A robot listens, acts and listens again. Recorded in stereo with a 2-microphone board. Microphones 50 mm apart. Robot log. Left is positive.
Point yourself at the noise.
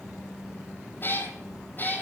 note: The cat meowing: about 35° left or 145° left.
cmd yaw +35
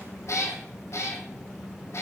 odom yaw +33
note: So it is at 125° left.
cmd yaw +125
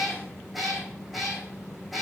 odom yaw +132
end: Found it: a cat meowing, straight ahead.